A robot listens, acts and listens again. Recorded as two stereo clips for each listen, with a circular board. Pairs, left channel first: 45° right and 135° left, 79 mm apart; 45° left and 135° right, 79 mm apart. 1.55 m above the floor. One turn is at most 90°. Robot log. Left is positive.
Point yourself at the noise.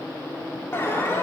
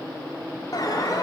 note: The alarm: 10° left.
cmd yaw +10
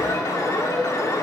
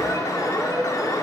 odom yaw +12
end: Facing the alarm, 2 to 4 m away.